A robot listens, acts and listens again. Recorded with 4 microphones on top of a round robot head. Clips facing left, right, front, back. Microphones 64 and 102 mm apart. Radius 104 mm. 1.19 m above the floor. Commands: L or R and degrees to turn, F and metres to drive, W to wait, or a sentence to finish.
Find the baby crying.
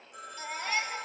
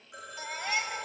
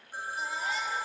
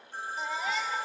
R170
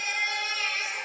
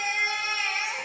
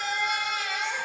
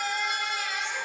R15
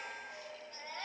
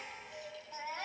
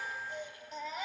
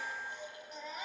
Found it: a baby crying, straight ahead, 2 to 4 m away.